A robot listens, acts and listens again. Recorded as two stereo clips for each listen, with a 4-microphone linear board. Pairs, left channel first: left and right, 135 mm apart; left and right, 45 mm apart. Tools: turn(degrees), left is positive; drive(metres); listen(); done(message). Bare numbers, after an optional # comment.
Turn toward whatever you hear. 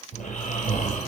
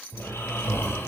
turn(90)
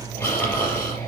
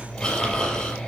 # So it is at 15° left.
turn(15)
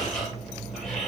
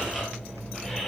done("Found it: snoring, straight ahead, over 4 m away.")